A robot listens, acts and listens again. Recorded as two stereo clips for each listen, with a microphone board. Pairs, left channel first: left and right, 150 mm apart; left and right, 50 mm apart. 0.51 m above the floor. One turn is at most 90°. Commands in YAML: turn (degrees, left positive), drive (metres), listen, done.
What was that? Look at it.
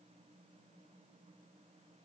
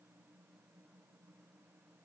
listen: true
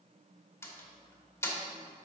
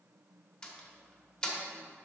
turn: 20
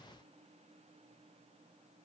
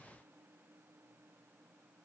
listen: true
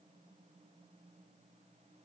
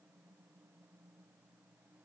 done: "I heard a door slam, but can't make it out now. It was about straight ahead or 140° left."